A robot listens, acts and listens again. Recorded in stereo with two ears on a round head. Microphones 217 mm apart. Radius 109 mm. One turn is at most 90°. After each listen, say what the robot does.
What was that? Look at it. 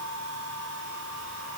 Keep listening.
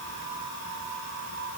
Keep listening.
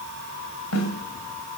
Turn 70° left.
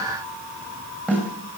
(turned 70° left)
Found it: a snare drum, straight ahead.